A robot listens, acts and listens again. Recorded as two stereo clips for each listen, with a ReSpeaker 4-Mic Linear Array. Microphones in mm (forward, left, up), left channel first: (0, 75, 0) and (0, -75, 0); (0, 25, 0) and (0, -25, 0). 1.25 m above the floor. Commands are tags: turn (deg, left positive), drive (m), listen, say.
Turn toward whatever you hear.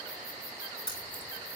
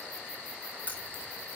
<turn deg="35"/>
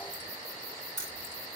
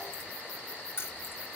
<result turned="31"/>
<turn deg="130"/>
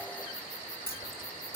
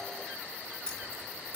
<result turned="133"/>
<turn deg="20"/>
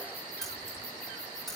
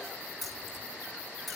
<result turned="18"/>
<say>Facing the keys jangling.</say>